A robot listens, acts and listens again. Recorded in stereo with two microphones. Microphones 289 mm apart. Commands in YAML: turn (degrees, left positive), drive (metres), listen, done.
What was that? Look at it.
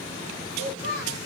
turn: 45
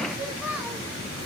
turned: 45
done: "Facing the child speaking."